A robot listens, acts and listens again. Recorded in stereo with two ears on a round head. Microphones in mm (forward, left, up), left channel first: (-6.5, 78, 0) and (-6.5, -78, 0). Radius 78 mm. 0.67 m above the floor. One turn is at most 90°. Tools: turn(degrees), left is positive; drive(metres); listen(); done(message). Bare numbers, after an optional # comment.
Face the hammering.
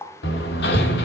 # The hammering: about 65° left or 115° left.
turn(65)
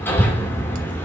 # So it is at 15° left.
turn(15)
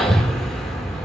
done("Facing the hammering.")